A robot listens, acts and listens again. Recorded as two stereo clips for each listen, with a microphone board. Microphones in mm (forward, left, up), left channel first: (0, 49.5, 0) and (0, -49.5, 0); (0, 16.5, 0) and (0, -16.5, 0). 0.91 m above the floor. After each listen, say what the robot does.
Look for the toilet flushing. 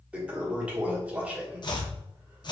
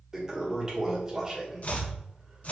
Turn 30° right.
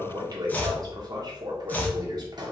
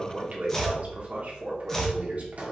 Turn 135° right.
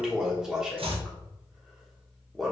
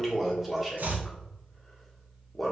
Found it: a toilet flushing, straight ahead, 1 to 2 m away.